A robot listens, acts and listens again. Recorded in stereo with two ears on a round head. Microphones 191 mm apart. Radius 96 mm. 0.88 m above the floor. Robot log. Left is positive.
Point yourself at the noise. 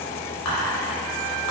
note: The whispering: about 70° left or 110° left.
cmd yaw +70
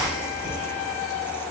cmd idle
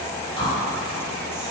note: So it is at 25° left.
cmd yaw +25
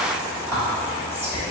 note: The whispering is now 10° right.
cmd yaw -10
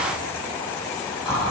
end: Facing the whispering, 1 to 2 m away.